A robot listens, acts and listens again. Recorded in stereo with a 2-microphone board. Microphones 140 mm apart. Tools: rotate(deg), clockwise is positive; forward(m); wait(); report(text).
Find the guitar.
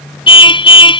wait()
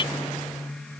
wait()
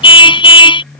report("I can't make out a guitar, only a car horn.")